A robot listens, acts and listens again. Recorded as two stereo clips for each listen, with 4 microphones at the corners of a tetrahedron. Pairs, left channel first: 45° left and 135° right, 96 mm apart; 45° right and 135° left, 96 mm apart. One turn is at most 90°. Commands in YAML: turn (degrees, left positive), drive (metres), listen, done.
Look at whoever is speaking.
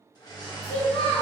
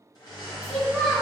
turn: 50
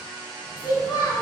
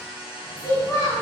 done: "Facing the child speaking, 1 to 2 m away."